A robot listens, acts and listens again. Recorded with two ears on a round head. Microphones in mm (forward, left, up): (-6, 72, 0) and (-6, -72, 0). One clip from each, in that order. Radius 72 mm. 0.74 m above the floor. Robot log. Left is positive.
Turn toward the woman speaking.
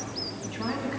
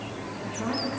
note: The woman speaking: about 45° left or 135° left.
cmd yaw +45
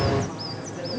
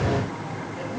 note: So it is at 10° left.
cmd yaw +10
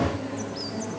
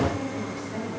end: Found it: a woman speaking, straight ahead, over 4 m away.